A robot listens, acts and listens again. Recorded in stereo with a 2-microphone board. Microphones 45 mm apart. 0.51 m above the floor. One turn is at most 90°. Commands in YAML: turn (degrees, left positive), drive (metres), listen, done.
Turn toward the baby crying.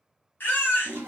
turn: 45
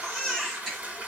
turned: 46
done: "Facing the baby crying, 1 to 2 m away."